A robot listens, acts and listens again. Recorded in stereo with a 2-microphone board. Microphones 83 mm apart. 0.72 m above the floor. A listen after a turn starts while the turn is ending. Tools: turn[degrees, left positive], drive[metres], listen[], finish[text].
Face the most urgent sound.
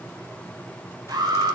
Thought: The alarm: about 65° right or 115° right.
Action: turn[-65]
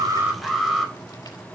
Action: finish[Facing the alarm, over 4 m away.]